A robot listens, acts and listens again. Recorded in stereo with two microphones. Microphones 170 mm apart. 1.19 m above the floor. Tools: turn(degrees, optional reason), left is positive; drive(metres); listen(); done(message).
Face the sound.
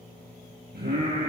turn(degrees=-90)
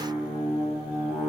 done("Facing the singing, over 4 m away.")